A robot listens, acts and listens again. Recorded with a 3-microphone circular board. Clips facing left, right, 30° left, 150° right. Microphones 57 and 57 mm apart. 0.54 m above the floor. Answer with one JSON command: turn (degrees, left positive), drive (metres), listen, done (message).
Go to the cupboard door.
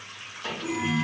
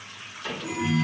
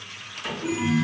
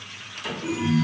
{"turn": 105}
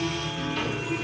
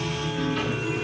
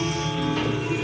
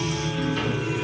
{"listen": true}
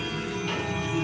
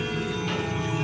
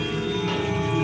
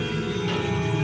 {"listen": true}
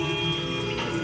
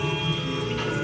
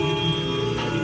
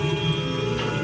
{"done": "I heard a cupboard door from this way, but can't make it out now. I did not reach it."}